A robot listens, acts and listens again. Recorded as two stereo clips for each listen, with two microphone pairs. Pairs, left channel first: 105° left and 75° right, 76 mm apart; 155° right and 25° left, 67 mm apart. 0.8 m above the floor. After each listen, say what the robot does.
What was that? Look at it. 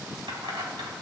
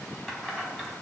Turn 75° right.
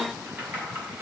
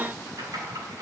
Turn 15° right.
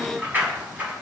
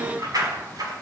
Facing the keys jangling, over 4 m away.